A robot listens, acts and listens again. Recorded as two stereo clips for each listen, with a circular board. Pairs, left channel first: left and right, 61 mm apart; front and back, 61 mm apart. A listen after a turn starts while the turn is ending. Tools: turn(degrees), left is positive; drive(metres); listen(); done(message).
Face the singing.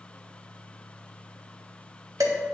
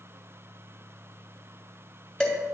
listen()
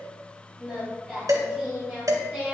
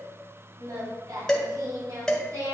turn(degrees=175)
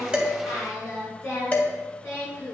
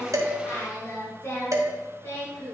turn(degrees=45)
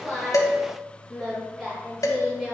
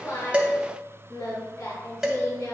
turn(degrees=-15)
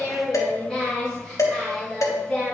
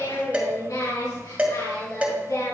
done("Facing the singing, over 4 m away.")